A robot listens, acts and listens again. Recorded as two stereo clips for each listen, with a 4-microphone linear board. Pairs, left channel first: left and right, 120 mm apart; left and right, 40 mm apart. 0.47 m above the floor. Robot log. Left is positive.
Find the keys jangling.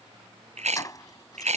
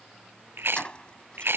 note: The keys jangling: about 30° left or 150° left.
cmd yaw +30
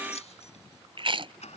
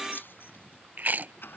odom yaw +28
note: So it is at 110° left.
cmd yaw +110
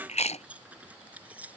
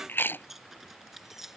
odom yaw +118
note: The keys jangling is now 10° right.
cmd yaw -10
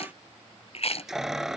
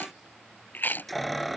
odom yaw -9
end: Found it: keys jangling, straight ahead.